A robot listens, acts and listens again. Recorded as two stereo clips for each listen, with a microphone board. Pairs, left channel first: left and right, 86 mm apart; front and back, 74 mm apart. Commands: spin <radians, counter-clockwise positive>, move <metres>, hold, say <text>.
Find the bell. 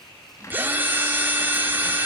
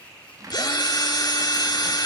hold
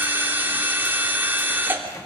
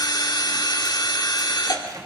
hold
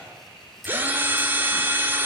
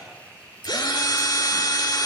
say I can't make out a bell, only a cupboard door and a drill.